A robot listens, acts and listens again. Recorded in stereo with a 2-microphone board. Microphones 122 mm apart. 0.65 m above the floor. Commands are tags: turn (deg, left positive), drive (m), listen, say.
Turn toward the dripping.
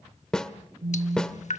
<turn deg="70"/>
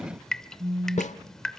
<say>Found it: dripping, straight ahead.</say>